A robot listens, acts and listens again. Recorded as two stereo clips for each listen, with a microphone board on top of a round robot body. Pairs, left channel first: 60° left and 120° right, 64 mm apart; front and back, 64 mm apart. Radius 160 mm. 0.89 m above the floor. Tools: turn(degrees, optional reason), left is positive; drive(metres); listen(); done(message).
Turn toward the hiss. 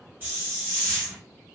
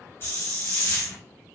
turn(degrees=-55, reason="The hiss: 55° right.")
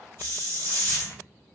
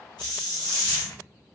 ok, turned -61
done("Found it: a hiss, straight ahead.")